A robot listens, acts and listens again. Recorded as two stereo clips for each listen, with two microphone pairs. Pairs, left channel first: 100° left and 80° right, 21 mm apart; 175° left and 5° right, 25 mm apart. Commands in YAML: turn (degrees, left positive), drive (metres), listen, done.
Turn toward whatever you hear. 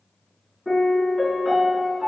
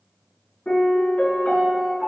turn: -175
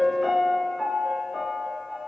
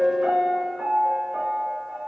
turn: -10
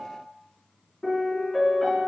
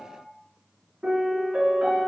done: "Found it: a piano, straight ahead."